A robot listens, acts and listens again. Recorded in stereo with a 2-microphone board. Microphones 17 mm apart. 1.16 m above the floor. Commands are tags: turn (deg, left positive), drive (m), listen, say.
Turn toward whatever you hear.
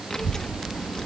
<turn deg="45"/>
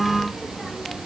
<say>Found it: a child speaking, straight ahead.</say>